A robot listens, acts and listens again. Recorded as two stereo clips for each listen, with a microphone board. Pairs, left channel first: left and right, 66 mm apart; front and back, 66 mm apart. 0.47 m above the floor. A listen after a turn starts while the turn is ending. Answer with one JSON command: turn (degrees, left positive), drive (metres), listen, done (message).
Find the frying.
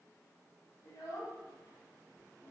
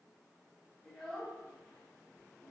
{"listen": true}
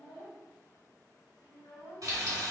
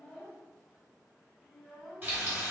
{"turn": -120}
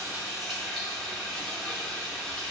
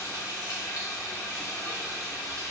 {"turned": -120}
{"turn": 10}
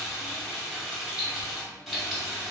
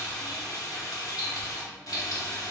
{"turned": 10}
{"done": "Found it: frying, straight ahead."}